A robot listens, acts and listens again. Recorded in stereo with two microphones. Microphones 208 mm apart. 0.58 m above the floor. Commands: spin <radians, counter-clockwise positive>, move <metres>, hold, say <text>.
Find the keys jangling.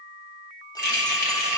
spin 0.79
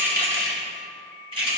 spin -0.52
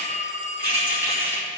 spin -0.17
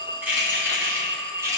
spin -0.26
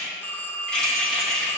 say Facing the keys jangling.